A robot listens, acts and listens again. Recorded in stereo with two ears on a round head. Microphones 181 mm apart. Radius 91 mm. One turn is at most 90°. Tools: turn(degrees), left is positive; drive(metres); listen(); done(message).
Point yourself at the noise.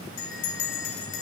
turn(degrees=70)
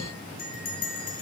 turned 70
turn(degrees=45)
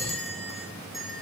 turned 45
done("Facing the bell.")